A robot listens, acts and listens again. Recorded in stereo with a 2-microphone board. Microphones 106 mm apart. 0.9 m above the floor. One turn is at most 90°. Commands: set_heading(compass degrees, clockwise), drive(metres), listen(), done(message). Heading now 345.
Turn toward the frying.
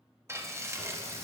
set_heading(10)
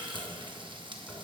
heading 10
set_heading(100)
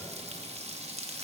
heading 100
set_heading(190)
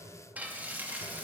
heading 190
set_heading(205)
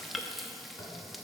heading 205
done("Found it: frying, straight ahead.")